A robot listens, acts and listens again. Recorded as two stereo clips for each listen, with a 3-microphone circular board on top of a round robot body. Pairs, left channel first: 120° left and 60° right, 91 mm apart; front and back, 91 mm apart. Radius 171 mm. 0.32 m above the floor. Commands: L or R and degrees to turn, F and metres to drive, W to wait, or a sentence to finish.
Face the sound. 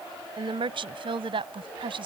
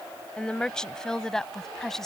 R85
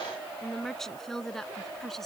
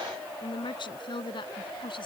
L35
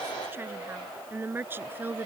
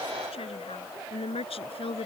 L10
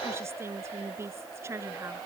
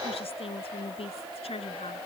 Facing the woman speaking.